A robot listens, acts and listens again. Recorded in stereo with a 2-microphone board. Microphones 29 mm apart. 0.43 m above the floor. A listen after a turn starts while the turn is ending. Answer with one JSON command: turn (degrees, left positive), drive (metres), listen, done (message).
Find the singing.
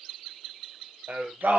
{"turn": -90}
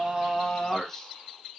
{"turn": 10}
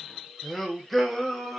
{"done": "Found it: singing, straight ahead."}